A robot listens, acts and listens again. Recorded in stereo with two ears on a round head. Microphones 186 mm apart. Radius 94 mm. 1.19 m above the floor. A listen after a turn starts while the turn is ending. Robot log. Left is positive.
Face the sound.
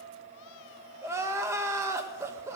cmd yaw -30
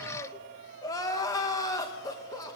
note: So it is at 15° left.
cmd yaw +15
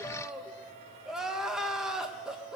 end: Facing the crying, 1 to 2 m away.